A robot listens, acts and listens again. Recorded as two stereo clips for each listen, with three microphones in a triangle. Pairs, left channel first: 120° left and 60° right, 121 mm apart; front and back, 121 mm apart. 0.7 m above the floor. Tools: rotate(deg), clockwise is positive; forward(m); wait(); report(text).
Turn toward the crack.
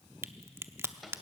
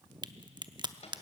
rotate(125)
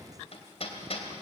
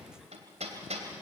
report("I heard a crack from this way, but can't make it out now.")